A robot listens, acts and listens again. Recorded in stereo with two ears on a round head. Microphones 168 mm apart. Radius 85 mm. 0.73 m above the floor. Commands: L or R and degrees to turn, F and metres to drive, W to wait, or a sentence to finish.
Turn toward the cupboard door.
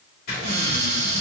R60
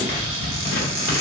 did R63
R50
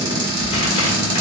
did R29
R20
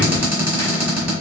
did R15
Found it: a cupboard door, straight ahead, 1 to 2 m away.